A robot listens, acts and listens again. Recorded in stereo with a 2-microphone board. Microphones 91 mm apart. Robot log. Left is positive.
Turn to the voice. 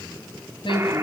note: The woman speaking: about 70° left or 110° left.
cmd yaw +70
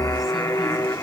cmd idle
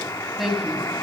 end: Found it: a woman speaking, straight ahead.